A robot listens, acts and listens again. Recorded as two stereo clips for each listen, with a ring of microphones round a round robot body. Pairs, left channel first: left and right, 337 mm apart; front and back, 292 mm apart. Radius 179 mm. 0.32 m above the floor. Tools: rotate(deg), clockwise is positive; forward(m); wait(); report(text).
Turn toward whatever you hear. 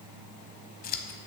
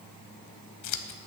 rotate(-25)
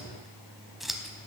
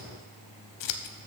report("Found it: scissors, straight ahead, under 1 m away.")